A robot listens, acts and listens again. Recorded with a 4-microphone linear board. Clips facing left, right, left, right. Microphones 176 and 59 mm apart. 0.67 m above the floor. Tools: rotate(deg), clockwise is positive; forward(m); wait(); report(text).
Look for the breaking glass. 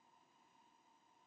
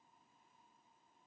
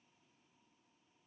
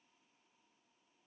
wait()
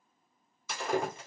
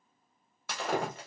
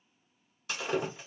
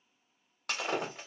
rotate(65)
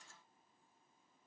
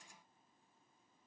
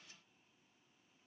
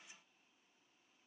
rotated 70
wait()
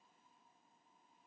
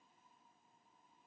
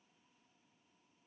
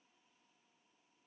report("I heard breaking glass, but can't make it out now. It was about 5° left or 45° right.")